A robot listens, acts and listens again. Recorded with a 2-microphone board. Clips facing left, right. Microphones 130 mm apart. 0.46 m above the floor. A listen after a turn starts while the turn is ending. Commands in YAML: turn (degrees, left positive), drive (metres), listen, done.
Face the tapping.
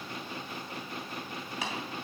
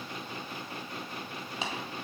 turn: -25
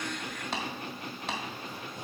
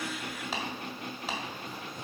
done: "Found it: tapping, straight ahead, 1 to 2 m away."